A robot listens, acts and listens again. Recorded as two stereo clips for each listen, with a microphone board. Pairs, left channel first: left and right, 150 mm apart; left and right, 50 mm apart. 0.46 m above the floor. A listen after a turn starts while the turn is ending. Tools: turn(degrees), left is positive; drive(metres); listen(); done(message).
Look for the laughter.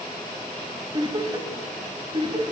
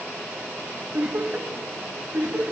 turn(degrees=-35)
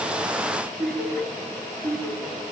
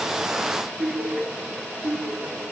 done("Found it: laughter, straight ahead, 2 to 4 m away.")